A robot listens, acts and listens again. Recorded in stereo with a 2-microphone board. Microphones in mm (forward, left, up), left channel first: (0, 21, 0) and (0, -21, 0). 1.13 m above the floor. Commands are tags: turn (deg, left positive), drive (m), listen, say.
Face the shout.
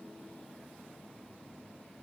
<listen/>
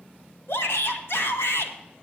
<turn deg="65"/>
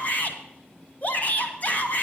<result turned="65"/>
<turn deg="40"/>
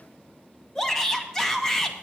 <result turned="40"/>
<turn deg="15"/>
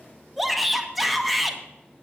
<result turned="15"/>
<say>Found it: a shout, straight ahead, 1 to 2 m away.</say>